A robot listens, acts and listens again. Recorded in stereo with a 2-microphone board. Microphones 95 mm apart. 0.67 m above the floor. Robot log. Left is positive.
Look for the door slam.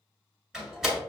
cmd yaw -30
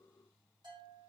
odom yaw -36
cmd idle
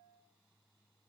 end: I heard a door slam, but can't make it out now. It was about 30° left or 140° right.